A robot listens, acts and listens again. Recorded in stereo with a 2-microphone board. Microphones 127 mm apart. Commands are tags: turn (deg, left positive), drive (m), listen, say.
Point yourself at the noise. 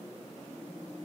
<listen/>
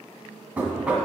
<turn deg="-30"/>
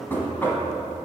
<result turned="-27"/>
<turn deg="20"/>
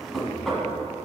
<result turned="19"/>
<say>Found it: knocking, straight ahead, 1 to 2 m away.</say>